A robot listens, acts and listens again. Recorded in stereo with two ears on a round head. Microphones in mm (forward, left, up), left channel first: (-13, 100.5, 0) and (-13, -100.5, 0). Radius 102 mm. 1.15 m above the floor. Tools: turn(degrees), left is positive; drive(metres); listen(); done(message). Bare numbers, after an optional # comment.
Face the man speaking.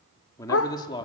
# The man speaking: about 20° left or 160° left.
turn(20)
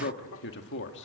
# So it is at 125° left.
turn(125)
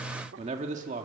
# The man speaking is now 35° right.
turn(-35)
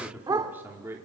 # The man speaking is now 10° right.
turn(-10)
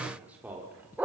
# The man speaking is now 10° right.
turn(-10)
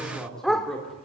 done("Found it: a man speaking, straight ahead.")